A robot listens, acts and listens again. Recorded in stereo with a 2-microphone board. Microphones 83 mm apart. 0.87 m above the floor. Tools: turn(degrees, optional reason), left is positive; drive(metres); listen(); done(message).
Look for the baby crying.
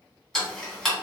listen()
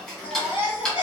turn(degrees=75, reason="The baby crying: about 75° left or 105° left.")
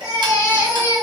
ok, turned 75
turn(degrees=30, reason="So it is at 30° left.")
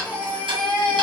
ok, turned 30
turn(degrees=15, reason="The baby crying is now 15° left.")
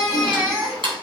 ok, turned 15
done("Found it: a baby crying, straight ahead, 1 to 2 m away.")